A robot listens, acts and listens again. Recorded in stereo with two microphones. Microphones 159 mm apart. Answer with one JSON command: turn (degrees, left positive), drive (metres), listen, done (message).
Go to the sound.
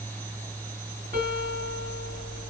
{"turn": -55}
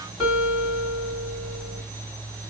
{"drive": 1.0}
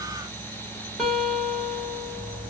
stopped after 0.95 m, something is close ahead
{"done": "Arrived at the guitar, straight ahead."}